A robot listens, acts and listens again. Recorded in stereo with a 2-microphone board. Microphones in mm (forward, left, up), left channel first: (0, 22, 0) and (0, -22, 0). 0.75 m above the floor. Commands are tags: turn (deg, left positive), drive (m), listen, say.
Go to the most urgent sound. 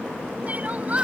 <turn deg="-35"/>
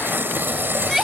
<drive m="1.0"/>
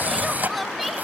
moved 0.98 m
<drive m="1.0"/>
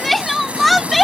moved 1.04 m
<drive m="1.0"/>
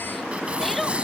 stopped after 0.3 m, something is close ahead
<say>I am next to the crying.</say>